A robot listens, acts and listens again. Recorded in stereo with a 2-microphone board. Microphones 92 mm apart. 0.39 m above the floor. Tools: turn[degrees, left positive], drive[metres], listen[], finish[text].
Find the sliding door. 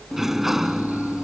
Action: turn[-30]
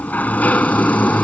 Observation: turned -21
Thought: So it is at 20° left.
Action: turn[20]
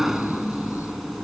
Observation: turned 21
Action: finish[Facing the sliding door.]